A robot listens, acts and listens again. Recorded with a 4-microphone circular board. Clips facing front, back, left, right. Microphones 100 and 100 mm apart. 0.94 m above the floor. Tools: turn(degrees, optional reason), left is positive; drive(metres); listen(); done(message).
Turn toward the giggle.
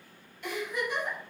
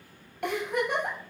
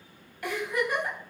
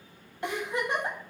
turn(degrees=-155, reason="The giggle: 155° right.")
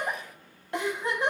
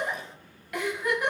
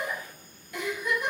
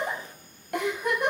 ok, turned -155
turn(degrees=-60, reason="The giggle is now 60° right.")
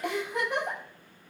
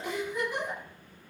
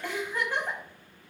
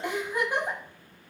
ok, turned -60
turn(degrees=-15, reason="The giggle is now 15° right.")
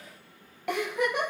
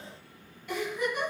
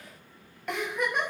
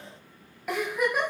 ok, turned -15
done("Facing the giggle.")